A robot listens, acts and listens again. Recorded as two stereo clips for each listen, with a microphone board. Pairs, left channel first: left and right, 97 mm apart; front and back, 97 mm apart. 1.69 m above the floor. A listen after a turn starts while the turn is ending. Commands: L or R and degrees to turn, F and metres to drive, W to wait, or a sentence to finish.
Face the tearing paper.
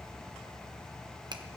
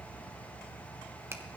W
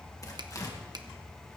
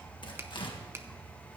L35
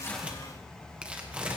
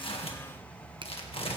R10
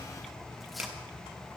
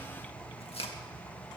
W
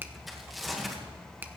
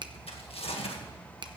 Facing the tearing paper, 1 to 2 m away.